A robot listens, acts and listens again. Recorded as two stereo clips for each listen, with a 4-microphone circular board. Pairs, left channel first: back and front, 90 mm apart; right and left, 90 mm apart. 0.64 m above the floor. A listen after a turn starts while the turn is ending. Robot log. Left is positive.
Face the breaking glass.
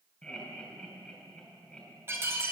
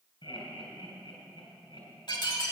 note: The breaking glass: 60° right.
cmd yaw -60
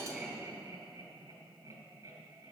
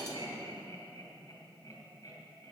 end: I heard breaking glass from this way, but can't make it out now.